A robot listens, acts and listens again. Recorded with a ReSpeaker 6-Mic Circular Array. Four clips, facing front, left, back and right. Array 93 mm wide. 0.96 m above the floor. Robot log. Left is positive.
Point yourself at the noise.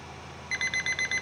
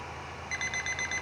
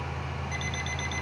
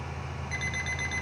note: The alarm clock: 15° left.
cmd yaw +15
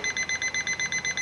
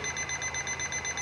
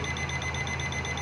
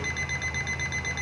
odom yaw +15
end: Found it: an alarm clock, straight ahead.